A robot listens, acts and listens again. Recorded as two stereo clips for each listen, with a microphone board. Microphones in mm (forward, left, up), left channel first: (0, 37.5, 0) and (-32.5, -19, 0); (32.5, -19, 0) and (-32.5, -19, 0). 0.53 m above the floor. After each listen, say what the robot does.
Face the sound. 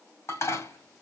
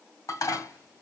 Turn 20° left.
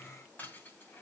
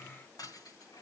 Facing the dishes clattering.